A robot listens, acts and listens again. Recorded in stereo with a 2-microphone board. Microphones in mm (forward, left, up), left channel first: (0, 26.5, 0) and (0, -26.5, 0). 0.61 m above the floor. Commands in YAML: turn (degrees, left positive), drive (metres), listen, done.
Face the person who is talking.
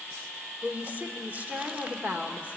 turn: -35
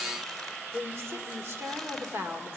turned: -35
turn: -105
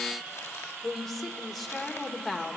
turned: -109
done: "Found it: a woman speaking, straight ahead."